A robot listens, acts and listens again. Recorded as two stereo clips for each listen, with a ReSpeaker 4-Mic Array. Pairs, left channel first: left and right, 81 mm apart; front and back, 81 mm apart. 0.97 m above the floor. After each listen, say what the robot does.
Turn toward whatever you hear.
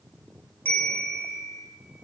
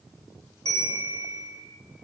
Turn 25° left.
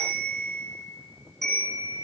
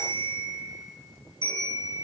Facing the bell, 2 to 4 m away.